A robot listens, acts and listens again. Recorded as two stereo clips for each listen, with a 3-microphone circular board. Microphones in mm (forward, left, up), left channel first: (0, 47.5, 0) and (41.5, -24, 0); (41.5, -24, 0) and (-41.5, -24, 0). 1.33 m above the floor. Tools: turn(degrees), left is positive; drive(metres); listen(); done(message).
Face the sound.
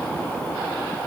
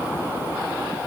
listen()
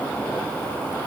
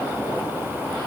listen()
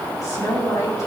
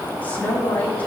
turn(degrees=70)
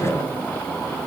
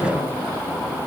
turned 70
listen()
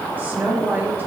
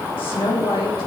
done("Facing the woman speaking.")